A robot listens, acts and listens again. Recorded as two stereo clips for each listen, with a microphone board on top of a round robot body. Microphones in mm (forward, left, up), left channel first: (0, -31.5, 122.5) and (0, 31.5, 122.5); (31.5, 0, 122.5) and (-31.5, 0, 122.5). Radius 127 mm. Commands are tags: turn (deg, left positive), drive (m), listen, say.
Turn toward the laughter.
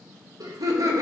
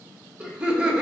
<turn deg="105"/>
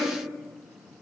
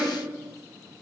<listen/>
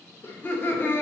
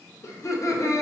<turn deg="-35"/>
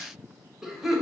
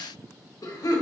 <say>Facing the laughter, 2 to 4 m away.</say>